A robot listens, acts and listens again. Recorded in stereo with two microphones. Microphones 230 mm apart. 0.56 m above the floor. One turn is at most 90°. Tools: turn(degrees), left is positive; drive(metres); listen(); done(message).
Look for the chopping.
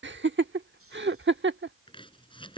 turn(degrees=20)
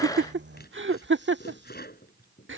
turn(degrees=90)
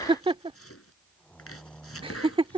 turn(degrees=80)
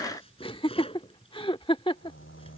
turn(degrees=25)
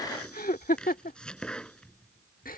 done("Found it: chopping, straight ahead.")